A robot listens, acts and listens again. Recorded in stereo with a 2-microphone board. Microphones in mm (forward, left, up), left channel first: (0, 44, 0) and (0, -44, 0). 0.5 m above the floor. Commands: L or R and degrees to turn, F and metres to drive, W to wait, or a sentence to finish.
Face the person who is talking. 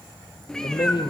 L55
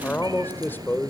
L25
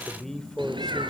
Facing the man speaking.